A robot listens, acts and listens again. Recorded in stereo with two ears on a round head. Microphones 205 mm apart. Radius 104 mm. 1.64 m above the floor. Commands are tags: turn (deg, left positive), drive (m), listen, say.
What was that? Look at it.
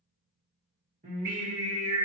<turn deg="-30"/>
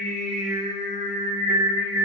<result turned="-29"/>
<turn deg="-20"/>
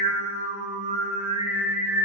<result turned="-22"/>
<turn deg="-30"/>
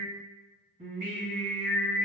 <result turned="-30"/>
<turn deg="-35"/>
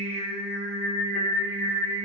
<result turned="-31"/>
<turn deg="-115"/>
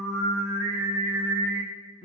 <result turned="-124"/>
<turn deg="15"/>
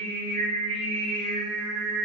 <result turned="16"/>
<say>Facing the singing.</say>